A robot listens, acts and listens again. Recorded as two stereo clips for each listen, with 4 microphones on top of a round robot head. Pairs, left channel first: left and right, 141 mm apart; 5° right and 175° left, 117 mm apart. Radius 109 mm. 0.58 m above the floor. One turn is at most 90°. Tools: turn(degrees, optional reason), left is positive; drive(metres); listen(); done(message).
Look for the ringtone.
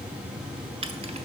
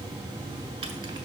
listen()
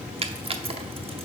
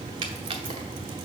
listen()
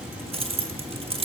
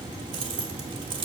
done("I can't make out a ringtone, only keys jangling.")